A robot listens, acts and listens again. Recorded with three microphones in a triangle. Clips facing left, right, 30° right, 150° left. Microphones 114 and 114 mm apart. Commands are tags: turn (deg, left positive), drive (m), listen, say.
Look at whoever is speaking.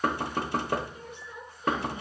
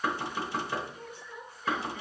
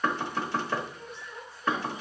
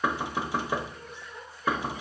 <turn deg="35"/>
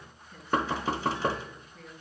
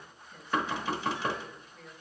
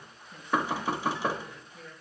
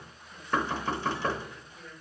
<turn deg="10"/>
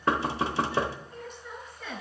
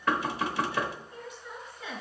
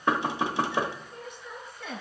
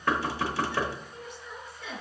<say>Found it: a woman speaking, straight ahead.</say>